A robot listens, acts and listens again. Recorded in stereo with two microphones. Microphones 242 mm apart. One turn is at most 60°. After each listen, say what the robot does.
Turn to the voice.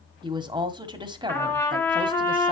Turn 20° right.
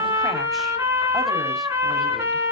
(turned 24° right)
Keep listening.
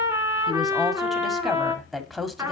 Facing the woman speaking, 1 to 2 m away.